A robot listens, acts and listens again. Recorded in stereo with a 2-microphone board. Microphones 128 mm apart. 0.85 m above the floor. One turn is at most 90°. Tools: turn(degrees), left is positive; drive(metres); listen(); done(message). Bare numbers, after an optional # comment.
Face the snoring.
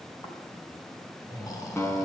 # The snoring: about 30° left or 150° left.
turn(30)
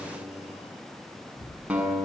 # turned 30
# So it is at 120° left.
turn(90)
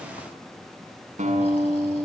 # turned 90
# Nothing new. It was at 30° left.
turn(30)
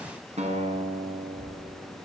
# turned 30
# The snoring is now 15° left.
turn(15)
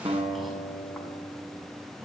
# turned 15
done("Facing the snoring, over 4 m away.")